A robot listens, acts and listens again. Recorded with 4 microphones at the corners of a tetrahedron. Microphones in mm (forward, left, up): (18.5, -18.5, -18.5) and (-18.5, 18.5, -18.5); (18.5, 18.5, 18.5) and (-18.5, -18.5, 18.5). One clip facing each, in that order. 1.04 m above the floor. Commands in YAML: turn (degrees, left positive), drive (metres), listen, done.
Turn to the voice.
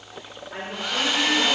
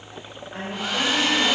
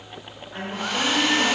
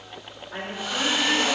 turn: -115
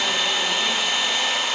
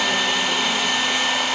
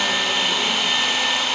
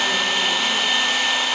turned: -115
listen: true
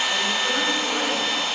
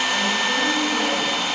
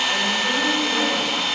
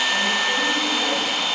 listen: true
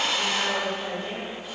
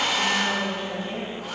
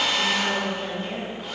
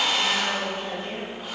turn: -25
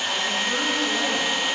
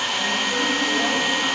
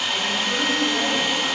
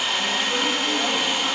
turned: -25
listen: true
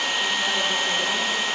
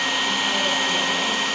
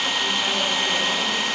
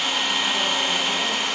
listen: true
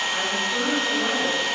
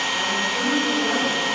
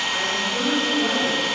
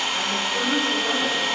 turn: -20
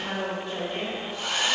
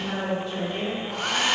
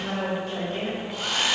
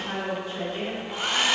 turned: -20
done: "Found it: a woman speaking, straight ahead, over 4 m away."